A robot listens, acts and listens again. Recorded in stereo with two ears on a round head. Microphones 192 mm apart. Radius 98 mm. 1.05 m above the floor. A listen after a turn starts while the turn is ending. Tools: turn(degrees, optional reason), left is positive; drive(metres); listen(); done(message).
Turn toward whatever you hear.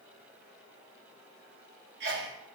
turn(degrees=-50, reason="The sneeze: about 50° right or 130° right.")
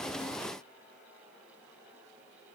listen()
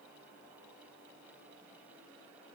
done("I heard a sneeze, but can't make it out now. It was about straight ahead or 80° right.")